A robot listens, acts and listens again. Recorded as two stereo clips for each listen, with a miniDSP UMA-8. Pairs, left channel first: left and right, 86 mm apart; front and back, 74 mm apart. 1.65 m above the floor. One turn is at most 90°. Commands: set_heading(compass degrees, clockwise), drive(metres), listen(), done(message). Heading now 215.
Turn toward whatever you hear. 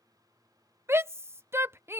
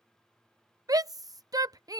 set_heading(305)
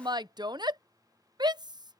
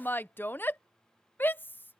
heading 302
set_heading(2)
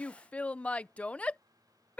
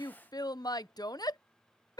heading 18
set_heading(3)
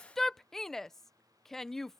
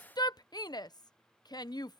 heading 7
done("Facing the shout.")